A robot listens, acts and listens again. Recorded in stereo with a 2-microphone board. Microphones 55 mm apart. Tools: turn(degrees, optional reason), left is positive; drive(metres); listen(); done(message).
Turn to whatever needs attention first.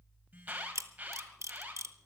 turn(degrees=-25, reason="The alarm: about 25° right or 155° right.")
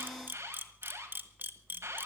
turn(degrees=-125, reason="So it is at 125° right.")
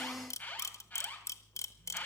turn(degrees=25, reason="The alarm is now 25° left.")
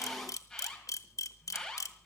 done("Found it: an alarm, straight ahead.")